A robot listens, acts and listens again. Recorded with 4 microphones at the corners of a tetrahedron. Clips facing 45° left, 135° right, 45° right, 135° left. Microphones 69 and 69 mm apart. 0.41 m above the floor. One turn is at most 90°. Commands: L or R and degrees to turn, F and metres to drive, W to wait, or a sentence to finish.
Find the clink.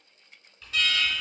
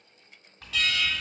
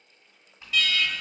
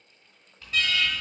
R90
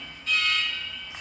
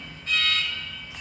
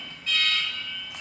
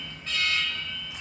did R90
R25
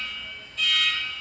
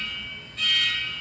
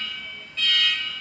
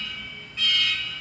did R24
W
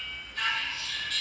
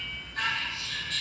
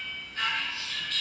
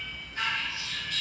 I heard a clink from this way, but can't make it out now.